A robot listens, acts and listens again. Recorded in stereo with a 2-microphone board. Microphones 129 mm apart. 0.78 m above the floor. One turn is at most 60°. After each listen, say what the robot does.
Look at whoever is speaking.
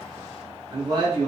Turn 35° right.
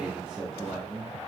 Facing the man speaking.